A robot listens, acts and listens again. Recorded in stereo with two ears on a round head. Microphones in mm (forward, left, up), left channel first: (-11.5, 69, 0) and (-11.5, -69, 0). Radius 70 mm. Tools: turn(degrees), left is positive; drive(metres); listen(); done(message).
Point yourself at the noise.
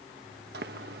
turn(degrees=-70)
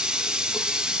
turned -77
done("Found it: a running tap, straight ahead.")